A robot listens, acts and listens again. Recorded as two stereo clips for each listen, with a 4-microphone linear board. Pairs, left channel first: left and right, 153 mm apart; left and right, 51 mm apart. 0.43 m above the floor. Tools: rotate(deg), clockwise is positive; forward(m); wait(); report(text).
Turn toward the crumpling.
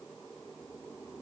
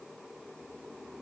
wait()
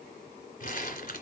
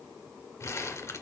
rotate(-75)
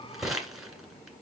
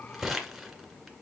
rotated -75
report("Facing the crumpling, 1 to 2 m away.")